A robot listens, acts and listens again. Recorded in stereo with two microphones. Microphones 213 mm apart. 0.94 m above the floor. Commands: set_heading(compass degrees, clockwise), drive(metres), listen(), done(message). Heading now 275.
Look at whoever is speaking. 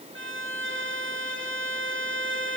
listen()
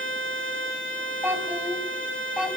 set_heading(305)
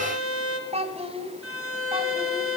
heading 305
set_heading(100)
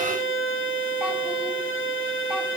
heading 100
listen()
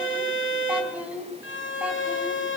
done("Facing the child speaking, over 4 m away.")